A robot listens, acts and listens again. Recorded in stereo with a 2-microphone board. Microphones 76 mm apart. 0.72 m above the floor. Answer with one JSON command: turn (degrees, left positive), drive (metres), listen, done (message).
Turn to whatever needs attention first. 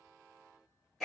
{"listen": true}
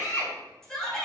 {"turn": 30}
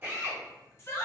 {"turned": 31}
{"turn": 140}
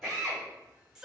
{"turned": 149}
{"turn": -10}
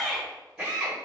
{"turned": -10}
{"done": "Facing the shout."}